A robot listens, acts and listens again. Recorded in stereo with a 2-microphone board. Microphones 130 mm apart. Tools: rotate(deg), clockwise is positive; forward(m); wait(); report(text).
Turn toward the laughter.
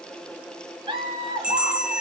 rotate(40)
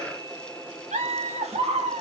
rotate(130)
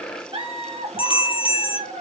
rotate(70)
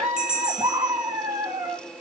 rotate(35)
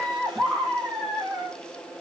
report("Facing the laughter, 1 to 2 m away.")